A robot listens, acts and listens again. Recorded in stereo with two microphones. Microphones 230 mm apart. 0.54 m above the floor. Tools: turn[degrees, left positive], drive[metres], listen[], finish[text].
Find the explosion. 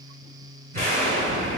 Thought: The explosion: about 40° right or 140° right.
Action: turn[-40]
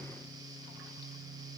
Action: listen[]
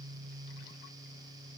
Action: finish[I heard an explosion, but can't make it out now. It was about straight ahead or 100° right.]